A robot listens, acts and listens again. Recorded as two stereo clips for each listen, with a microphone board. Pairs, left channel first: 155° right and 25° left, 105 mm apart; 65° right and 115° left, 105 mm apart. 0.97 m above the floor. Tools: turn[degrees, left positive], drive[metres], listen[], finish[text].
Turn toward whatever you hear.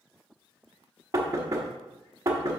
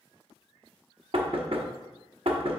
Thought: The knocking: 80° left.
Action: turn[80]
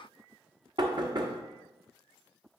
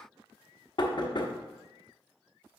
Thought: The knocking is now 25° right.
Action: turn[-25]
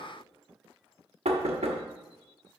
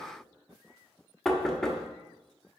Thought: The knocking is now 20° left.
Action: turn[20]
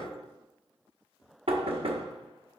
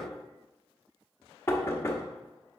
Action: finish[Facing the knocking.]